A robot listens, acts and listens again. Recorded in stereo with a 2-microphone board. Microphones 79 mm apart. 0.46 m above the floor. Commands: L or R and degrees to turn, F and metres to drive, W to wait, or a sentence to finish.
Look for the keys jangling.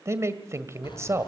L70
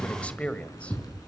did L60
L50
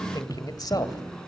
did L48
L10
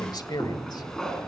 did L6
L10
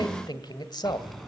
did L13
Found it: keys jangling, straight ahead, 2 to 4 m away.